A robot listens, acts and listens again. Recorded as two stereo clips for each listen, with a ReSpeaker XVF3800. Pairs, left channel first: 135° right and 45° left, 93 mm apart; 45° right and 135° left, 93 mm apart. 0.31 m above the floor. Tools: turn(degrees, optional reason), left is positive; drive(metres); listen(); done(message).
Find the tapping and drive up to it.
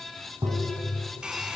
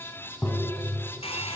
turn(degrees=25, reason="The tapping: 25° left.")
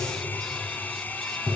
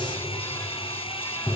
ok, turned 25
drive(metres=1.0)
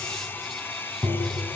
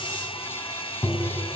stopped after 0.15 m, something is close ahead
done("Something is in my way. I am facing the tapping but have not reached it.")